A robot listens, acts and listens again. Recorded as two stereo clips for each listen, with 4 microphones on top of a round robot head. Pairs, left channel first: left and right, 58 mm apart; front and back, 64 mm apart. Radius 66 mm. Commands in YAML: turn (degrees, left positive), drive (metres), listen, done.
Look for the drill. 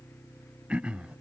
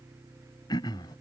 listen: true
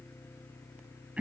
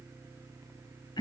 listen: true
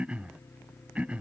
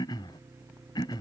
done: "I can't make out a drill, only throat clearing."